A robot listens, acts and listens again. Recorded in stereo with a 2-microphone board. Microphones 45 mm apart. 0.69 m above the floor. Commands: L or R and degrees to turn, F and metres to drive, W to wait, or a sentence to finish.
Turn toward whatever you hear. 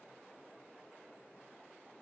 W
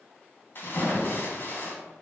L50
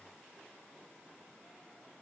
W
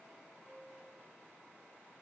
I heard a splash, but can't make it out now. It was about straight ahead or 80° left.